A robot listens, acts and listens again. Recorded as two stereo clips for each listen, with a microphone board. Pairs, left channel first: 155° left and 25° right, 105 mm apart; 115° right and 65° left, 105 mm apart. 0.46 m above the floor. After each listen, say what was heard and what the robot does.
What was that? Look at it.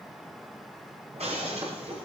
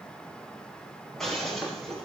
The breaking glass: 25° right. Turn 25° right.
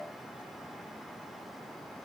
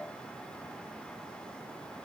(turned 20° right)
I heard breaking glass from this way, but can't make it out now.